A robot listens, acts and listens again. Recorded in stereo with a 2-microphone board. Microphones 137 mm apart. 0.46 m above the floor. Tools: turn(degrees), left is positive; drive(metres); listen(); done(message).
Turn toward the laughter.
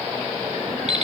listen()
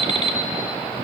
listen()
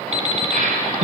turn(degrees=-75)
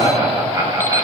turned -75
turn(degrees=-20)
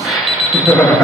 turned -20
done("Facing the laughter, over 4 m away.")